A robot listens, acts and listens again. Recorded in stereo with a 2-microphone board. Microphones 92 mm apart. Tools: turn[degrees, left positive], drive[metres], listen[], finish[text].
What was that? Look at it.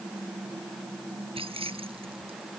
Action: turn[-90]
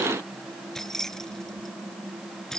Action: finish[Found it: keys jangling, straight ahead.]